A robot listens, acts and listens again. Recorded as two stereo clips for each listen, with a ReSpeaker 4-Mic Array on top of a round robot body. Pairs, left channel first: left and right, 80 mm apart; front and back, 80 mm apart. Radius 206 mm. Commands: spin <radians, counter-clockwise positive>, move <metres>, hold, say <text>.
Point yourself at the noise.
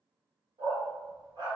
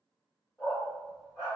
spin -1.05
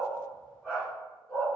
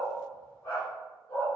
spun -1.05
spin 0.44
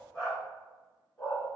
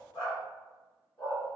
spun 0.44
spin 0.44
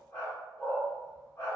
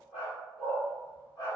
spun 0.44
spin 0.44
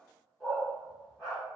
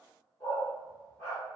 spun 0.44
say Facing the dog barking.